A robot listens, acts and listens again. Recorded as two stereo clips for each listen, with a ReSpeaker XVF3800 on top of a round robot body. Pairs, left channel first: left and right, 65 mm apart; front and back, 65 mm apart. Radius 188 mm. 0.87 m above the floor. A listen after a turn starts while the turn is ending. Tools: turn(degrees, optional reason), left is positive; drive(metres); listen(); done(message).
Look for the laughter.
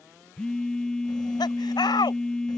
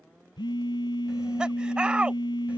turn(degrees=105, reason="The laughter: 105° left.")
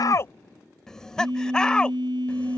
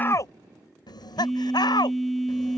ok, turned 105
turn(degrees=15, reason="The laughter is now 15° left.")
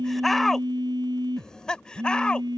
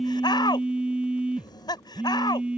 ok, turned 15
turn(degrees=15, reason="The laughter is now 15° left.")
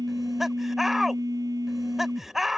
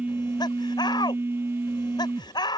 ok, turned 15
done("Found it: laughter, straight ahead.")